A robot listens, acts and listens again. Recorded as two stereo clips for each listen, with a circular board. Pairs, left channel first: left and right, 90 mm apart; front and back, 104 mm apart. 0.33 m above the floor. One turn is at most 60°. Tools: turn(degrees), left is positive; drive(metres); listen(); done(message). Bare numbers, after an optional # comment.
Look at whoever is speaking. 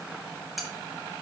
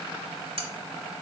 listen()
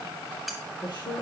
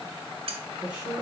# The woman speaking: 105° left.
turn(60)
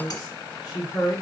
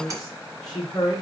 # The woman speaking is now 50° left.
turn(50)
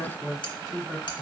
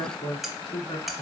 # The woman speaking is now 15° left.
turn(15)
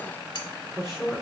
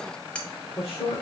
done("Found it: a woman speaking, straight ahead, 2 to 4 m away.")